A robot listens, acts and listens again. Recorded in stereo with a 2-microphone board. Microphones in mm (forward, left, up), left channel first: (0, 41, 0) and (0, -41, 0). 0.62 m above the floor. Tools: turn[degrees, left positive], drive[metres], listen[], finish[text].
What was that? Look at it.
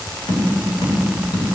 Thought: The tapping: about 60° left or 120° left.
Action: turn[60]
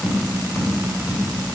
Thought: So it is at 50° left.
Action: turn[50]
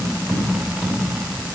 Action: finish[Facing the tapping.]